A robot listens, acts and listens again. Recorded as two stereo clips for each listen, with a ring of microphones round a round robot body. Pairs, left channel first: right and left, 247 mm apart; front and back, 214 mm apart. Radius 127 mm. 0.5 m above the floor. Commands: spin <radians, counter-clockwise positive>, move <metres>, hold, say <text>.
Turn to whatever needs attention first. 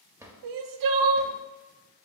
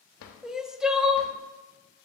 spin 1.57
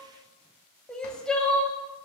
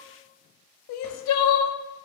say Facing the crying.